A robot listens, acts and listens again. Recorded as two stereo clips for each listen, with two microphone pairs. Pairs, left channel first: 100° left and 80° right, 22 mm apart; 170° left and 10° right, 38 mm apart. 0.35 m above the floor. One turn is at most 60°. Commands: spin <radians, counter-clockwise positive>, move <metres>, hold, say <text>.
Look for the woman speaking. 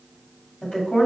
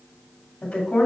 spin 1.05
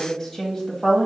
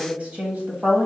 spin 0.44
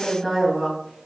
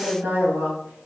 spin -0.17
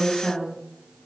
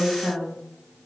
say Found it: a woman speaking, straight ahead, 2 to 4 m away.